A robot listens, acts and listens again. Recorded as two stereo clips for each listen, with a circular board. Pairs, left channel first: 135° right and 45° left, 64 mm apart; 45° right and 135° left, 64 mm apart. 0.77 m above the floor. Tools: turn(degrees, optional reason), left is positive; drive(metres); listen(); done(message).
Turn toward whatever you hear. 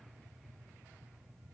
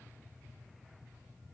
listen()
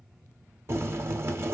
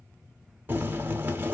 turn(degrees=80, reason="The boiling: 80° left.")
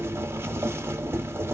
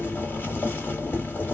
done("Found it: boiling, straight ahead.")